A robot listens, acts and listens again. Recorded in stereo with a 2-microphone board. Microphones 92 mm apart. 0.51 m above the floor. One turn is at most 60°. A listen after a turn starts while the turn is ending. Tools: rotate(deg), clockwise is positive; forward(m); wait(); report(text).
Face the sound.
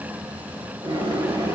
rotate(60)
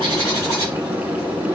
rotate(45)
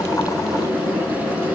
rotate(-10)
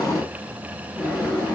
report("Found it: a bird, straight ahead, 2 to 4 m away.")